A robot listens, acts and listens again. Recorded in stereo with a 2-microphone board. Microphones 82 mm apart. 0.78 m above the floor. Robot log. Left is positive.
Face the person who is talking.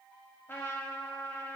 cmd idle
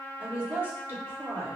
note: The woman speaking: about 30° right or 150° right.
cmd yaw -30
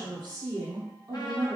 note: So it is at 115° right.
cmd yaw -115
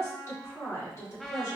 note: The woman speaking is now 40° left.
cmd yaw +40
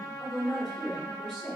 end: Found it: a woman speaking, straight ahead.